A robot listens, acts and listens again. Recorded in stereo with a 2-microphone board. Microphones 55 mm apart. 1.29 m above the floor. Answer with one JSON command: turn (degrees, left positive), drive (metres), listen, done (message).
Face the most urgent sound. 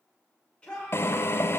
{"turn": 20}
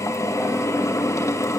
{"listen": true}
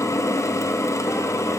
{"listen": true}
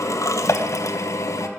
{"done": "I heard a shout, but can't make it out now. It was about straight ahead or 140° left."}